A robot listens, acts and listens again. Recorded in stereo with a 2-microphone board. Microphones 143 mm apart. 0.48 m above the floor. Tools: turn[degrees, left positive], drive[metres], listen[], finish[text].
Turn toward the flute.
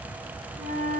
Action: turn[-90]
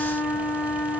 Action: finish[Found it: a flute, straight ahead.]